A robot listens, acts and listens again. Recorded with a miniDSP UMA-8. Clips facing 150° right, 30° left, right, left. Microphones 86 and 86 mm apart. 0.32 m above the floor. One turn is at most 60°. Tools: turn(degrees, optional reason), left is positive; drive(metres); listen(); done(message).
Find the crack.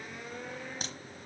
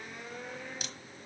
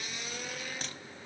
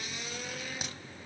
turn(degrees=60, reason="The crack: 165° left.")
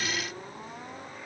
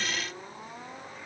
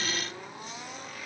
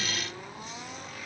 turn(degrees=60, reason="Nothing new. It was at 105° left.")
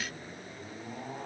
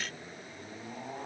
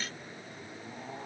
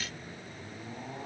turn(degrees=45, reason="Nothing new. It was at 45° left.")
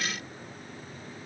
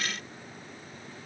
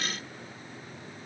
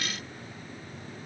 done("Facing where the crack came from. I can't hear it now.")